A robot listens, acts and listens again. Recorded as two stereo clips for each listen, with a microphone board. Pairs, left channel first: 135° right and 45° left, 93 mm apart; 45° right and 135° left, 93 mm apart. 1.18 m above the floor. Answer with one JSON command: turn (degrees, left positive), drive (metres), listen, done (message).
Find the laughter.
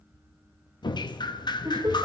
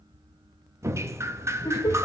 {"done": "Found it: laughter, straight ahead, 1 to 2 m away."}